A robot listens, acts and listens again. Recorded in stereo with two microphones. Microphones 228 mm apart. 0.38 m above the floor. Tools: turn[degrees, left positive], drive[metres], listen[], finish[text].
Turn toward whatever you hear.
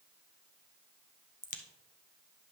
Thought: The crack: about 35° left or 145° left.
Action: turn[35]
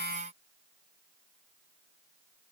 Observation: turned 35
Action: listen[]
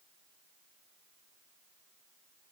Action: finish[I heard a crack, but can't make it out now. It was about straight ahead or 110° left.]